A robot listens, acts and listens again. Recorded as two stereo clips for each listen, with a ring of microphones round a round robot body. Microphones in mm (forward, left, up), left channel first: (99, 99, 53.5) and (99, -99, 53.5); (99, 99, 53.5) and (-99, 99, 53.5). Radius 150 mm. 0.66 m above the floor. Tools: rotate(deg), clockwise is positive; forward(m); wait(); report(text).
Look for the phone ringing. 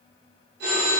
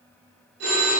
rotate(135)
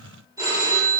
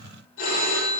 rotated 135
rotate(15)
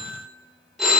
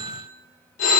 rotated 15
report("Found it: a phone ringing, straight ahead.")